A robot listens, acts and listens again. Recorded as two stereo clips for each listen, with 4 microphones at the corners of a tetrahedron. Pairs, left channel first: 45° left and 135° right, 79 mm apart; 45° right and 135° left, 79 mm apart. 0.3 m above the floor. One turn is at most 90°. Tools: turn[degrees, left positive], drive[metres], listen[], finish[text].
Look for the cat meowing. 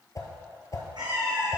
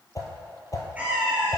Thought: The cat meowing: 155° right.
Action: turn[-90]
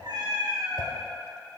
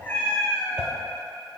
Thought: The cat meowing is now 115° right.
Action: turn[-90]
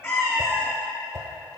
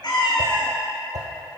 Thought: The cat meowing is now 20° right.
Action: turn[-20]
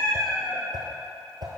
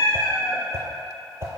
Action: finish[Found it: a cat meowing, straight ahead.]